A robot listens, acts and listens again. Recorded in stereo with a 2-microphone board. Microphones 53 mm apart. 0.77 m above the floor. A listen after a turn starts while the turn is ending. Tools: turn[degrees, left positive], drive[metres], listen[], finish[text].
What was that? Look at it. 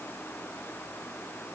Action: listen[]
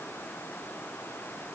Action: listen[]
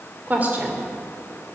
Thought: The woman speaking: about 35° right or 145° right.
Action: turn[-35]
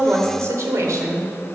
Thought: So it is at 110° right.
Action: turn[-110]
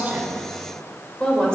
Thought: The woman speaking is now 15° left.
Action: turn[15]
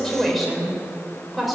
Action: finish[Facing the woman speaking, 2 to 4 m away.]